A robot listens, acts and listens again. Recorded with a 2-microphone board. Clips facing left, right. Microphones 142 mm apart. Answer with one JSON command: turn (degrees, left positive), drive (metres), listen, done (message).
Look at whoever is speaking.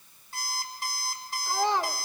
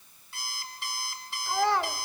{"turn": 20}
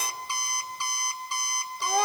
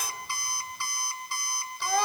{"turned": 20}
{"turn": 140}
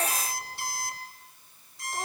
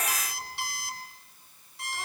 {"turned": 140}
{"listen": true}
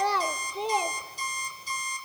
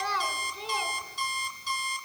{"turn": 45}
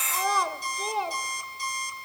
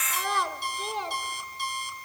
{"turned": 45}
{"done": "Facing the child speaking."}